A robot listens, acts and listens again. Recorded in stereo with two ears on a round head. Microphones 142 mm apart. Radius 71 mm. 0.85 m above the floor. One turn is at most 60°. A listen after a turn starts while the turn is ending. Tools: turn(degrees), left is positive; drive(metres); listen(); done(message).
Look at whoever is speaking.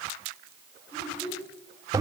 turn(degrees=30)
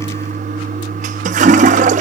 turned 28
listen()
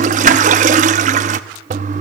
listen()
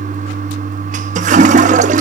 done("I heard a child speaking, but can't make it out now. It was about 15° right or 140° left.")